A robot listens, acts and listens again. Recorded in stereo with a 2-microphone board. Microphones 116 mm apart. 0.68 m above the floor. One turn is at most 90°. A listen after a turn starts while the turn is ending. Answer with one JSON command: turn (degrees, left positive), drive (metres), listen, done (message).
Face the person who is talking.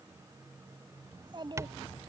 {"turn": -45}
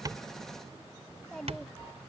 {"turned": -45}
{"done": "Found it: a child speaking, straight ahead."}